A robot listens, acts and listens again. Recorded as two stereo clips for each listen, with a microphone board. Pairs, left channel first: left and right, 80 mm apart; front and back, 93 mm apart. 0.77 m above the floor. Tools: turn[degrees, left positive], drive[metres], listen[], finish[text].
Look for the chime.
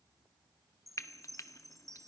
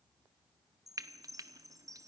Thought: The chime: 130° right.
Action: turn[-130]
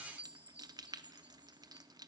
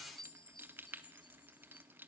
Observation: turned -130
Thought: The chime is now 20° right.
Action: turn[-20]
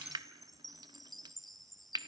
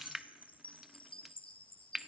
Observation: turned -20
Action: finish[Facing the chime.]